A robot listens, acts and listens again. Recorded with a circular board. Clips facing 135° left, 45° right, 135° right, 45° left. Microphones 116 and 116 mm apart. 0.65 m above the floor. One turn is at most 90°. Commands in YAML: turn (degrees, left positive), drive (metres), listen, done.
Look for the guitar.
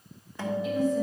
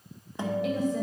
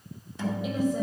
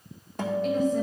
turn: 20
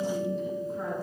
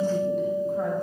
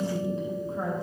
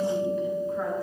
done: "Found it: a guitar, straight ahead."